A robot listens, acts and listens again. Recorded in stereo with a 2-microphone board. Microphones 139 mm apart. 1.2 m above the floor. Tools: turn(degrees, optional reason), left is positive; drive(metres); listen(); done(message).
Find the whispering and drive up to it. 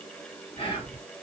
turn(degrees=40, reason="The whispering: about 40° left or 140° left.")
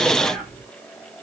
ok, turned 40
drive(metres=1.0)
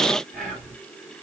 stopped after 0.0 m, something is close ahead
done("Something is in my way. I am facing the whispering but have not reached it.")